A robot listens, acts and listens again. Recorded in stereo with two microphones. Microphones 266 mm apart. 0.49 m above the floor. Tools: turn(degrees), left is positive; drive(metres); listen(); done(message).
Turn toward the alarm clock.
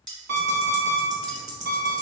turn(degrees=-90)
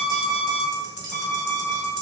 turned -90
done("Facing the alarm clock.")